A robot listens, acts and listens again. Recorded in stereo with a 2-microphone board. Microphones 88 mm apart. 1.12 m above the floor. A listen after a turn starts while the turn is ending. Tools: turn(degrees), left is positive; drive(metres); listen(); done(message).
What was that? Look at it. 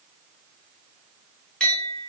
turn(degrees=30)
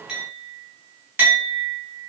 turn(degrees=-20)
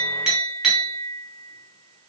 turn(degrees=-10)
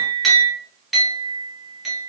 done("Found it: a clink, straight ahead.")